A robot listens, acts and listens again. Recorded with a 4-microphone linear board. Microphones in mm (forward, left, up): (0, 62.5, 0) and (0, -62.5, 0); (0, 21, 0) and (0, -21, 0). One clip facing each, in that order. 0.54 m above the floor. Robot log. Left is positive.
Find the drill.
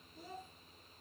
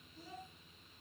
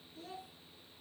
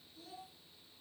cmd idle
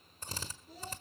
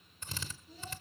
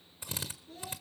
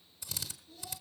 note: The drill: about 40° left or 140° left.
cmd yaw +40
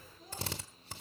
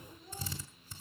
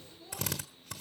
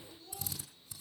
note: So it is at 100° left.
cmd yaw +100
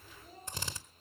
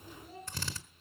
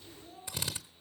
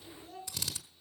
note: The drill is now 20° left.
cmd yaw +20
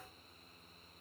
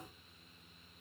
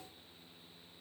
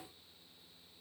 cmd idle
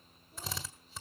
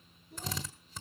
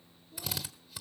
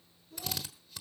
end: Facing the drill, 1 to 2 m away.